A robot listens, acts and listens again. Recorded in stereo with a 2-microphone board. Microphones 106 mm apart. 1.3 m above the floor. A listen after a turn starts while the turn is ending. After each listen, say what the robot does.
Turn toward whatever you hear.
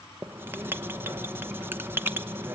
Turn 20° right.
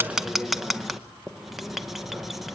Found it: writing, straight ahead.